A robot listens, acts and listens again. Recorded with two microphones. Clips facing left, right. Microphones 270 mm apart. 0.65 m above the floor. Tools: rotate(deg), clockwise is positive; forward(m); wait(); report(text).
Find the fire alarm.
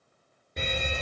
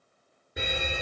rotate(30)
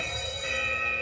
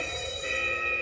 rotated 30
rotate(140)
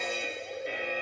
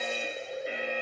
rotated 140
report("Facing the fire alarm.")